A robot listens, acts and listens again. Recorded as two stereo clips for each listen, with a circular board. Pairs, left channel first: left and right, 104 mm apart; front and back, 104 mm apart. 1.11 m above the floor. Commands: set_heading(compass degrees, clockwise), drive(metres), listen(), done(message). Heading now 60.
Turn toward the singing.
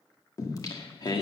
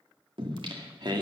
set_heading(285)
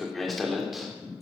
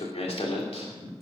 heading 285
done("Facing the singing.")